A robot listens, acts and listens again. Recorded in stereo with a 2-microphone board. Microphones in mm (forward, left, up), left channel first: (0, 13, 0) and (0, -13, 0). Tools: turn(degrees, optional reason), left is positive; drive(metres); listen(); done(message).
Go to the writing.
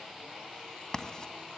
turn(degrees=30, reason="The writing: about 30° left or 150° left.")
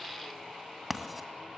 drive(metres=1.0)
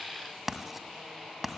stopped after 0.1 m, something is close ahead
done("Something is in my way. I am facing the writing but have not reached it.")